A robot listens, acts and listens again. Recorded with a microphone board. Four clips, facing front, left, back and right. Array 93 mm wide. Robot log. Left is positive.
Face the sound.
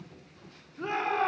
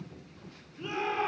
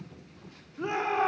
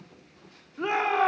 note: The shout: 100° right.
cmd yaw -100
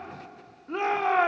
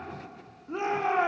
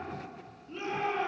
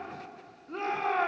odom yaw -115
note: The shout is now 15° left.
cmd yaw +15
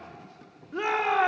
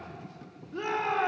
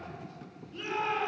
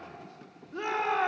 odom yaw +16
end: Found it: a shout, straight ahead.